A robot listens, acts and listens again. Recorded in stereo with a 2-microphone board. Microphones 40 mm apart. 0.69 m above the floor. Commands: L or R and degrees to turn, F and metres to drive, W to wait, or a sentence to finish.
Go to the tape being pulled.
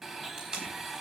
R20
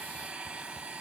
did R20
W
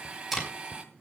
F1.0
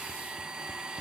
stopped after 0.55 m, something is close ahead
W
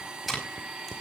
Something is in my way. I am facing the tape being pulled but have not reached it.